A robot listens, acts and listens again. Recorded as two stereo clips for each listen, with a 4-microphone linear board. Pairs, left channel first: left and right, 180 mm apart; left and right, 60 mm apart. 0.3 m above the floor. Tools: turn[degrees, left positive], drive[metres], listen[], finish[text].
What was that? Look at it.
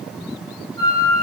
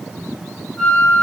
Thought: The flute: about 15° left or 165° left.
Action: turn[15]
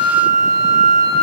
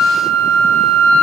Thought: So it is at 150° left.
Action: turn[150]
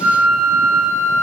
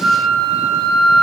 Thought: The flute is now 15° left.
Action: turn[15]
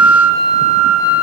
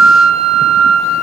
Action: finish[Found it: a flute, straight ahead, 1 to 2 m away.]